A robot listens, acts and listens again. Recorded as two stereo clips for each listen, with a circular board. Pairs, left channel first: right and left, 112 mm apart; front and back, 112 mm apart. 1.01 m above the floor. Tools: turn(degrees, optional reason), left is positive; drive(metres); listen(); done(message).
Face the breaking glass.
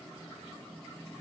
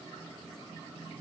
listen()
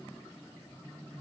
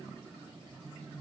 listen()
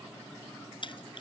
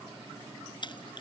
turn(degrees=-45, reason="The breaking glass: 45° right.")
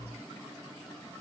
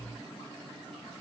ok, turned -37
turn(degrees=-10, reason="Nothing new. It was at 10° right.")
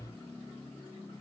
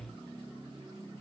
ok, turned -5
done("I heard breaking glass from this way, but can't make it out now.")